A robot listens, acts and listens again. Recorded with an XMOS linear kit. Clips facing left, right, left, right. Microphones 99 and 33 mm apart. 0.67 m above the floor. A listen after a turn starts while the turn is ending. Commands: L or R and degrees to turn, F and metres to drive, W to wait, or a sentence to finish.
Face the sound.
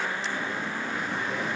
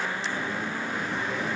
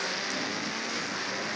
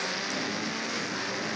W
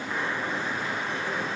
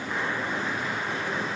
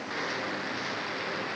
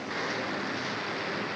W
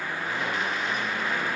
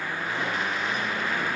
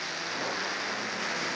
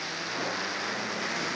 I can't make out anything.